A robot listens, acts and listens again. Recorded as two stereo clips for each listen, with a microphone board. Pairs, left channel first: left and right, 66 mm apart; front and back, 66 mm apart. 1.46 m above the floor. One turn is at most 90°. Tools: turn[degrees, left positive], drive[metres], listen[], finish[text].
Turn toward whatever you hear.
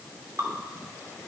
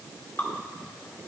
Thought: The dripping: 55° right.
Action: turn[-55]
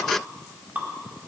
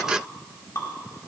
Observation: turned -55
Thought: The dripping is now 25° right.
Action: turn[-25]
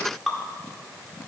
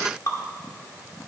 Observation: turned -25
Action: finish[Found it: dripping, straight ahead, 1 to 2 m away.]